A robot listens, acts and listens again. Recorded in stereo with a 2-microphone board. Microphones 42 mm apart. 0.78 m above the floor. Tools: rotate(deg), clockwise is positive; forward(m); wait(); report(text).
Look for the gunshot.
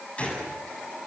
rotate(-30)
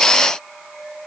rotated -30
wait()
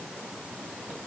report("I heard a gunshot, but can't make it out now. It was about straight ahead or 120° left.")